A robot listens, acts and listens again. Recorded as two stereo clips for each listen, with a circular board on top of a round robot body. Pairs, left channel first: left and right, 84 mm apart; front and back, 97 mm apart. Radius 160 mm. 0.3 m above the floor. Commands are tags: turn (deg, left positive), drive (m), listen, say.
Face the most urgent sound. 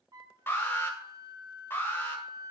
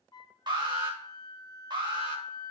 <turn deg="150"/>
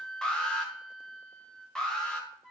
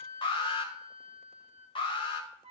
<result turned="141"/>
<turn deg="10"/>
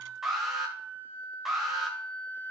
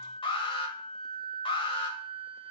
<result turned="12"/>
<say>Facing the alarm.</say>